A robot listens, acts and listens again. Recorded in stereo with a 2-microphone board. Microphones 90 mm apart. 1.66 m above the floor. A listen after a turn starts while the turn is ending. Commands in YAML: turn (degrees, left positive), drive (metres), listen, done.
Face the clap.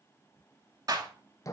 turn: -45
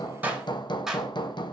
done: "Found it: a clap, straight ahead, 2 to 4 m away."